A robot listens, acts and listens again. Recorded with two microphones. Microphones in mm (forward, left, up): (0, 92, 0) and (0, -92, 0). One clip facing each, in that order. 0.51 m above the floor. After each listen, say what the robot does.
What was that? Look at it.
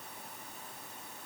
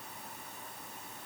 Keep listening.
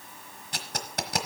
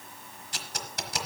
Turn 65° left.
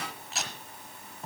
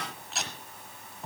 Found it: tape being pulled, straight ahead.